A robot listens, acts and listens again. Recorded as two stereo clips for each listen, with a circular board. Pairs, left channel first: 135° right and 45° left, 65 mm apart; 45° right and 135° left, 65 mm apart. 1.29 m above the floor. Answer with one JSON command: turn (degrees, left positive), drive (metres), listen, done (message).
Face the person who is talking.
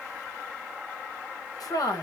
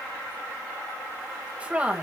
{"turn": -155}
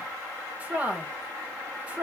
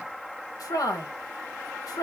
{"turn": -20}
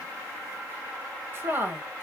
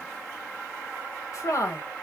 {"turn": -10}
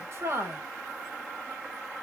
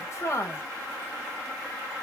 {"done": "Facing the woman speaking."}